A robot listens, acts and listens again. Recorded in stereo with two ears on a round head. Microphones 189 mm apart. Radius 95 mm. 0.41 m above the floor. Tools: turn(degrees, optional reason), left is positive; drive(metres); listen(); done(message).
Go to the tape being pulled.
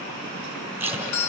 turn(degrees=-30)
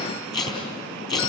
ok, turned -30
turn(degrees=20, reason="So it is at 20° left.")
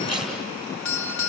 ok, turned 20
drive(metres=1.0)
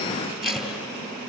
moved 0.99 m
drive(metres=1.0)
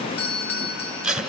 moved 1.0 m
drive(metres=1.0)
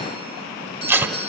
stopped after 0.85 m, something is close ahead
turn(degrees=-10, reason="The tape being pulled is now 10° right.")
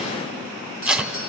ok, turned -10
done("I am next to the tape being pulled.")